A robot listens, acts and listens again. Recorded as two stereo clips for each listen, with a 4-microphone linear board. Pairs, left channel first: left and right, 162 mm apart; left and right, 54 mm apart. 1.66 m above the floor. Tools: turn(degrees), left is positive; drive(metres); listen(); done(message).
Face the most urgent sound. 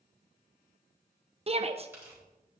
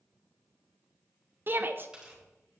turn(degrees=-40)
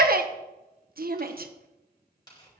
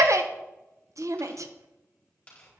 turn(degrees=-100)
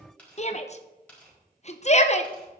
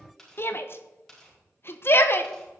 turn(degrees=50)
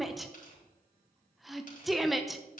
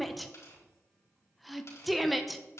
done("Facing the shout, 1 to 2 m away.")